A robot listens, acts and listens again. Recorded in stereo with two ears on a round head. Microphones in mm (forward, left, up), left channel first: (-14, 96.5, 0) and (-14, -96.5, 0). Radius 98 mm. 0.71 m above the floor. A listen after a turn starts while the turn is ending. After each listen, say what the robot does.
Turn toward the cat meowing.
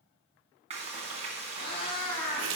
Turn 25° left.
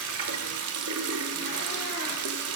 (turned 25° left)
Keep listening.
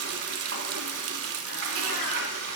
Keep listening.
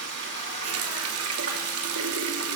I heard a cat meowing, but can't make it out now. It was about straight ahead or 130° left.